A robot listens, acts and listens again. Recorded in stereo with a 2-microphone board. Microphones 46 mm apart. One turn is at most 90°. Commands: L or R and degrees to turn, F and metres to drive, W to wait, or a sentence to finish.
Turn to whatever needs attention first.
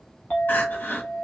L50
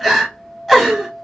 Found it: crying, straight ahead.